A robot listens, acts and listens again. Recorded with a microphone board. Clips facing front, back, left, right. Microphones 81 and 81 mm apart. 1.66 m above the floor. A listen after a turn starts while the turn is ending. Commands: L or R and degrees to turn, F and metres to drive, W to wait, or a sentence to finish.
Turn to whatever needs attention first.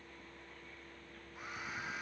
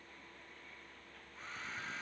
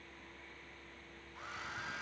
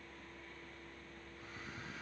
W
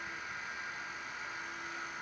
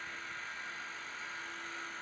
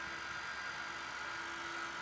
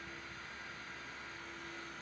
W
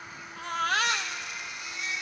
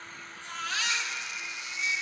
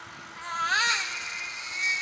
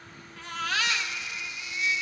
L30
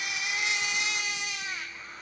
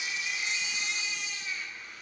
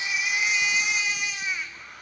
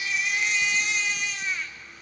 L10
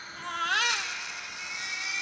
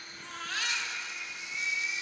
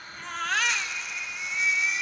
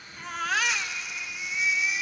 Found it: a baby crying, straight ahead, 1 to 2 m away.